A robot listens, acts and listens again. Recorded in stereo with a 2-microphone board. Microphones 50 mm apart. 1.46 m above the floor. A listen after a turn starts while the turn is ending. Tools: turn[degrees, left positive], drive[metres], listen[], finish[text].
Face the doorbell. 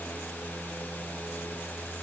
Action: listen[]
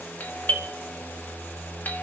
Thought: The doorbell: about 40° left or 140° left.
Action: turn[40]
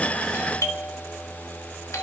Thought: So it is at 100° left.
Action: turn[100]
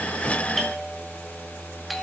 Action: finish[Facing the doorbell, 1 to 2 m away.]